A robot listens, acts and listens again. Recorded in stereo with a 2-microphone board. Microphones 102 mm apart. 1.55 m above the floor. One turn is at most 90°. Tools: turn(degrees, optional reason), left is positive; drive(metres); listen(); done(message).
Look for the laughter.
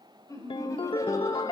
turn(degrees=30, reason="The laughter: about 30° left or 150° left.")
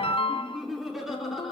done("Facing the laughter.")